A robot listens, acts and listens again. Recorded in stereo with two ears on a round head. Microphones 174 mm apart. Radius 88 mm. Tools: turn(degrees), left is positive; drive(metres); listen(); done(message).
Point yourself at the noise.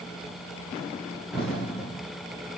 turn(degrees=30)
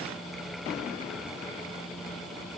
listen()
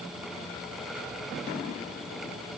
done("I heard an explosion, but can't make it out now. It was about 25° right or 145° left.")